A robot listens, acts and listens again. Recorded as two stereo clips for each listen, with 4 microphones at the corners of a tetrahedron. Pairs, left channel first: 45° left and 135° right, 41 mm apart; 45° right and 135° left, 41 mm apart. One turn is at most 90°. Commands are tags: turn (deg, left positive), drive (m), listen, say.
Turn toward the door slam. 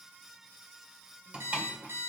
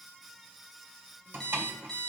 <turn deg="90"/>
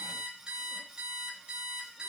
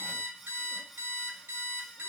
<turn deg="75"/>
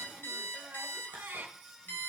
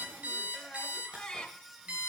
<say>Facing where the door slam came from. I can't hear it now.</say>